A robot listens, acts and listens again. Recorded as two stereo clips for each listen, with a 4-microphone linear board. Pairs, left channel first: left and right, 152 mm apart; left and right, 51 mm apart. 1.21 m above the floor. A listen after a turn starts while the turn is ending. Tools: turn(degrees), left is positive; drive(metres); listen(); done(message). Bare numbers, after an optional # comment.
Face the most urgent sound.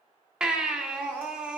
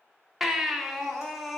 turn(-30)
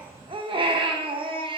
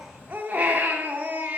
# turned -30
# So it is at 145° right.
turn(-145)
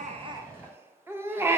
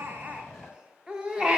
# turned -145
# The baby crying is now 15° right.
turn(-15)
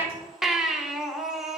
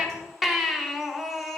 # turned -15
done("Facing the baby crying.")